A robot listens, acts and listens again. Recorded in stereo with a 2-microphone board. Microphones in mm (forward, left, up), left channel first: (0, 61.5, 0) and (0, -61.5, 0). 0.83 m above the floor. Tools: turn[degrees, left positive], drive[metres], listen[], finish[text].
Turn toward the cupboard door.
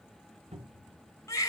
Thought: The cupboard door: about 60° right or 120° right.
Action: turn[-60]
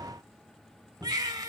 Action: finish[Found it: a cupboard door, straight ahead.]